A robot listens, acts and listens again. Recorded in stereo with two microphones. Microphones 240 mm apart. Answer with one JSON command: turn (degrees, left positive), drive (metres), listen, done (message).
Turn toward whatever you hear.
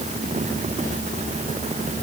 {"listen": true}
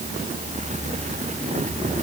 {"listen": true}
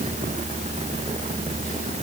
{"done": "I can't make out anything to turn to."}